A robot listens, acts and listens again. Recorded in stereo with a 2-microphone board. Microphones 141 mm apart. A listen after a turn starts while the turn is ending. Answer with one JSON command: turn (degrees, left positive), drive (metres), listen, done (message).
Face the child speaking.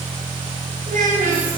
{"turn": -75}
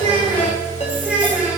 {"turn": -10}
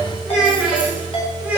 {"turn": -10}
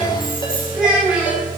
{"turn": -10}
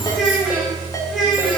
{"done": "Facing the child speaking, over 4 m away."}